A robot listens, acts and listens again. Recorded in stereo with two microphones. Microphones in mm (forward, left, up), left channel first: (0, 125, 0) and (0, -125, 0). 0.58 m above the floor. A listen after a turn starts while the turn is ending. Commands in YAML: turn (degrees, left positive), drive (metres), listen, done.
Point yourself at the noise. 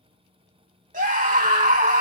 turn: -35
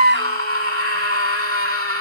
turn: -110
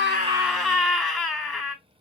done: "Found it: a scream, straight ahead."